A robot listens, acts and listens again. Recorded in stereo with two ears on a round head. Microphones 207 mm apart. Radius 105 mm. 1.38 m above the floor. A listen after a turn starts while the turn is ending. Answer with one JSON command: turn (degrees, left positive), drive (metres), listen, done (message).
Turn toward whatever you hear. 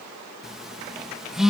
{"turn": 30}
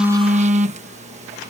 {"turn": -30}
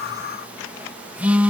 {"done": "Found it: a phone buzzing, straight ahead."}